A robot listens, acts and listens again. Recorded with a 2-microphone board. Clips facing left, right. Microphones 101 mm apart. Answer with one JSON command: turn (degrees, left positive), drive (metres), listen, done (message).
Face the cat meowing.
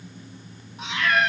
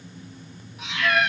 {"turn": 35}
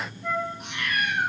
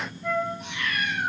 {"turn": 105}
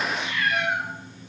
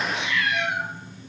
{"turn": 50}
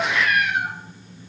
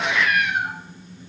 {"done": "Found it: a cat meowing, straight ahead, 2 to 4 m away."}